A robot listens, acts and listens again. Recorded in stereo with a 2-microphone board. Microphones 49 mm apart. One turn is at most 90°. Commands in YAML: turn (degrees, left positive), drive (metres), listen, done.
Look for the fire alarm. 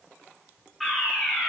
turn: 30
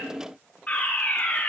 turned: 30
turn: 90
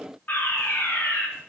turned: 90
turn: 40
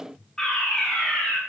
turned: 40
turn: 10
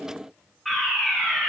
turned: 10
done: "Found it: a fire alarm, straight ahead, over 4 m away."